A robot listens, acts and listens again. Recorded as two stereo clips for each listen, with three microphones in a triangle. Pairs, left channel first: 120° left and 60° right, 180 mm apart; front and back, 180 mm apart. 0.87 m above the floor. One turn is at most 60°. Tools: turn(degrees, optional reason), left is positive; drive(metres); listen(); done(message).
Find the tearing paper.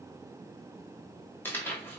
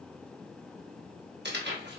turn(degrees=-60, reason="The tearing paper: 160° right.")
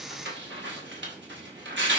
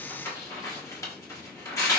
turn(degrees=-60, reason="The tearing paper is now 70° right.")
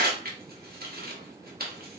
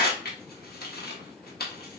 turn(degrees=-30, reason="The tearing paper is now 30° right.")
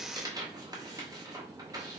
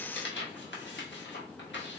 turn(degrees=10, reason="The tearing paper is now 10° left.")
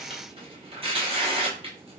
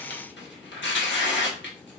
done("Facing the tearing paper.")